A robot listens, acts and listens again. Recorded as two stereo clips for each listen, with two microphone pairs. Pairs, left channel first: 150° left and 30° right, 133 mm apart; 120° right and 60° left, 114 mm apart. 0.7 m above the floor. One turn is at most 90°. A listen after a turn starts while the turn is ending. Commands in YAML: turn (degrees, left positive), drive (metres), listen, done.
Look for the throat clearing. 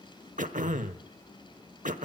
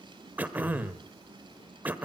turn: -15
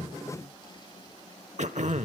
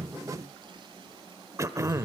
done: "Facing the throat clearing, 1 to 2 m away."